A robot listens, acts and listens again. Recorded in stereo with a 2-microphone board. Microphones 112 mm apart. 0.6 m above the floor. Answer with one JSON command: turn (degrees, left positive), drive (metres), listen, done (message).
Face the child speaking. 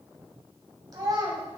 {"turn": -40}
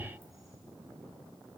{"listen": true}
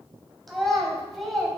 {"done": "Facing the child speaking, 2 to 4 m away."}